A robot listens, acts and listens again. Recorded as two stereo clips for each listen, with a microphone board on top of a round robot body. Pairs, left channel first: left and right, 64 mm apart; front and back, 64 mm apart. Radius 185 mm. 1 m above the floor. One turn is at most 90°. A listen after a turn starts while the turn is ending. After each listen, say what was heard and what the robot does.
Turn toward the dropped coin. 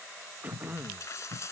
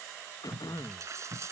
The dropped coin: 135° left. Turn 90° left.
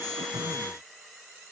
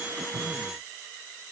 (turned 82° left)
Nothing new. It was at 55° left. Turn 55° left.
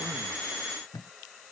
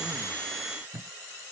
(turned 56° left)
I heard a dropped coin from this way, but can't make it out now.